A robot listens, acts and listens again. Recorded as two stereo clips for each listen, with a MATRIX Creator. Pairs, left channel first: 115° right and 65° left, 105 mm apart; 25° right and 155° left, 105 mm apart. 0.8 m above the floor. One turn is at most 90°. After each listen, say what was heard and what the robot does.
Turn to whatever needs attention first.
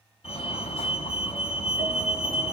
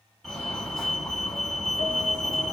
The fire alarm: 115° right. Turn 90° right.
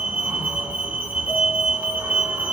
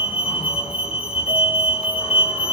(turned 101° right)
The fire alarm is now 10° right. Turn 10° right.
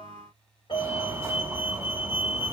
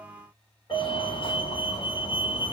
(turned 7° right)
Facing the fire alarm, over 4 m away.